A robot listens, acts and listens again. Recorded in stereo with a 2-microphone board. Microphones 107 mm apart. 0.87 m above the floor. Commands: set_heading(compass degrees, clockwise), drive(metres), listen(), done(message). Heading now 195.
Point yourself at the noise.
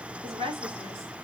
set_heading(255)
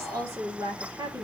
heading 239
set_heading(274)
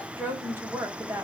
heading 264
set_heading(289)
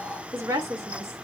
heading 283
set_heading(308)
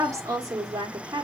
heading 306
set_heading(346)
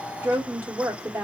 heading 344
set_heading(359)
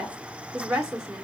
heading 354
set_heading(4)
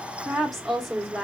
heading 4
done("Found it: a woman speaking, straight ahead, 1 to 2 m away.")